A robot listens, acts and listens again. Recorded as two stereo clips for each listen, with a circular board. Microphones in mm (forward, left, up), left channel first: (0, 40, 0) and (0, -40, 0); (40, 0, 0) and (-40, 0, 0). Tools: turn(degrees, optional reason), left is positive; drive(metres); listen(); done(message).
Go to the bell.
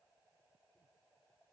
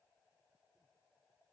listen()
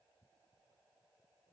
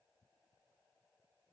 listen()
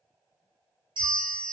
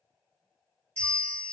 turn(degrees=-70, reason="The bell: 70° right.")
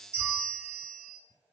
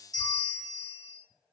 turn(degrees=-20, reason="The bell is now 20° right.")
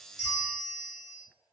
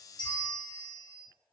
drive(metres=1.0)
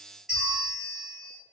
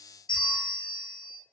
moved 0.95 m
drive(metres=1.0)
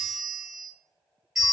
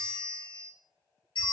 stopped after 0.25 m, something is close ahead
done("I am next to the bell.")